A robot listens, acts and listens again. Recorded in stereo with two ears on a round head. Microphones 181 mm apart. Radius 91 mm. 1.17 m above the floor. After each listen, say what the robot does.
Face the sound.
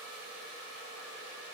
Keep listening.
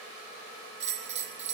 Turn 30° right.
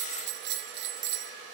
Turn 115° right.
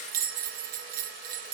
Turn 45° right.
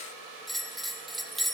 Facing the bell, under 1 m away.